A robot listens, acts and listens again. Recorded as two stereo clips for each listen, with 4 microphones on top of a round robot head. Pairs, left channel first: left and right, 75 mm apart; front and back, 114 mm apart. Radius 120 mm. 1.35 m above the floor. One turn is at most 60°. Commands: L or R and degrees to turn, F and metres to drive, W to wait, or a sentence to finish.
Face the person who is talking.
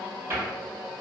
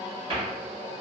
W
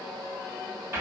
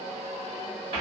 W
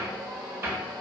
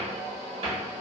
I can't make out anyone speaking to turn to.